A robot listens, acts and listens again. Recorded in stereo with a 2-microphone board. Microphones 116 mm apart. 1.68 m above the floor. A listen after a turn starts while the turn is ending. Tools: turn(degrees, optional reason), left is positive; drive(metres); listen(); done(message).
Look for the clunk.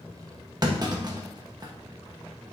turn(degrees=-35, reason="The clunk: about 35° right or 145° right.")
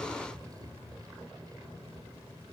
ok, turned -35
listen()
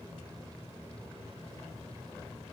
done("I heard a clunk, but can't make it out now. It was about straight ahead or 110° right.")